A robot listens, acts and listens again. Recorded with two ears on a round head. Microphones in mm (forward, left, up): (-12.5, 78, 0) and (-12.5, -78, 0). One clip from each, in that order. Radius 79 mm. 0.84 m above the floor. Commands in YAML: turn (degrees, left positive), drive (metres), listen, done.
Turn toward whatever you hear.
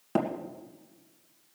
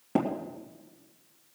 turn: 40
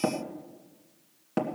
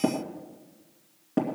turn: 95
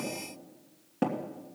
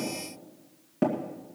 turn: 10
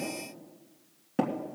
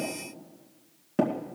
done: "Facing the tapping, 1 to 2 m away."